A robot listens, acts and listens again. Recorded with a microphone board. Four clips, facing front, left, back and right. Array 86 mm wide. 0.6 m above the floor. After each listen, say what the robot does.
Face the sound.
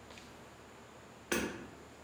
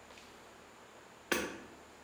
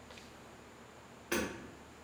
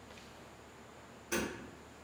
Turn 75° left.
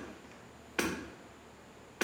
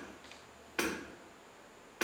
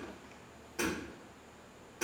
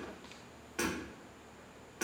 Turn 25° left.
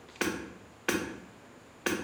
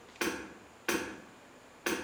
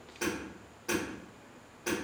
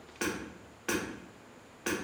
Turn 10° left.
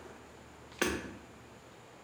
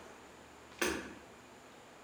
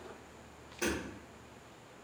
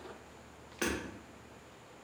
Found it: hammering, straight ahead.